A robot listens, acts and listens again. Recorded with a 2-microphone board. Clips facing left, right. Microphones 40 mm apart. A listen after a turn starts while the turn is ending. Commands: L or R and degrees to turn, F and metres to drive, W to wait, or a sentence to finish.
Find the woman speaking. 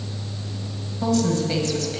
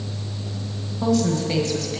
R30
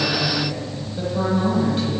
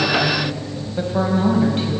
R140
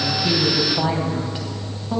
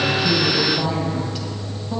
L25
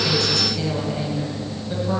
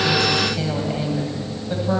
R10
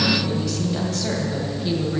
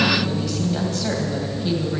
Found it: a woman speaking, straight ahead.